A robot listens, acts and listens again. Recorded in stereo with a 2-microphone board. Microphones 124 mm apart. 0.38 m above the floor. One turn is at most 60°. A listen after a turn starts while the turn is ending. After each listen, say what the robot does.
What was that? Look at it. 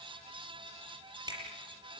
Turn 35° right.
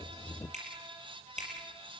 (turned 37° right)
Turn 60° right.
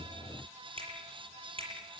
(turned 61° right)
Turn 50° right.
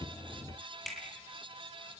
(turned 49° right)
Facing the finger snap.